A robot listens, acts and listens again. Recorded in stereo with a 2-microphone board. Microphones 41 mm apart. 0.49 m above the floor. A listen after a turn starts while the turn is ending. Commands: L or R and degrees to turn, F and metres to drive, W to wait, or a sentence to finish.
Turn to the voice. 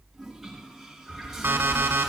L90
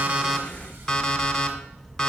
R10
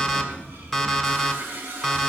Found it: a child speaking, straight ahead.